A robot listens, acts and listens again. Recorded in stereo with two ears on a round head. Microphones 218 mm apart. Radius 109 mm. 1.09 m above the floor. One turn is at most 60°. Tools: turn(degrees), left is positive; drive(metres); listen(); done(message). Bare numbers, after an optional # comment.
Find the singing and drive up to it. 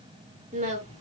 # The singing: about 35° right or 145° right.
turn(-35)
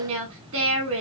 # So it is at 115° right.
turn(-60)
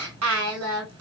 # The singing is now 65° right.
turn(-60)
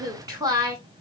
# The singing is now 15° right.
turn(-15)
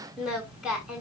drive(1.0)
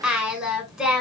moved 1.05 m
drive(1.0)
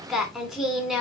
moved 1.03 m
drive(1.0)
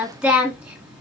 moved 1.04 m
drive(1.0)
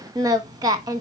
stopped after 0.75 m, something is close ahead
# The singing is now 15° right.
turn(-15)
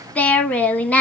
done("I am next to the singing.")